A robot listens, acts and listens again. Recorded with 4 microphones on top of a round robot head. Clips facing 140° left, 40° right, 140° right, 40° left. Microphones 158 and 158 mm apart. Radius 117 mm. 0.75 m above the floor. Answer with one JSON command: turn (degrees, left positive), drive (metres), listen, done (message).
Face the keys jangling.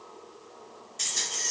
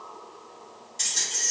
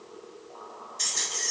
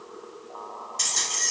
{"turn": 40}
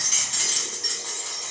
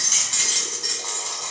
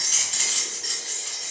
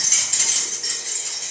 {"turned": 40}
{"done": "Facing the keys jangling, 1 to 2 m away."}